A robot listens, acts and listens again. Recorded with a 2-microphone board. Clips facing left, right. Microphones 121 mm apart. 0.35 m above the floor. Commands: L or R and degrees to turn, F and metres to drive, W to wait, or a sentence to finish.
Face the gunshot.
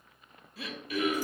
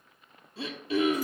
W
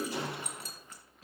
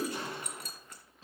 L90
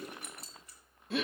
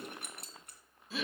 Facing where the gunshot came from. I can't hear it now.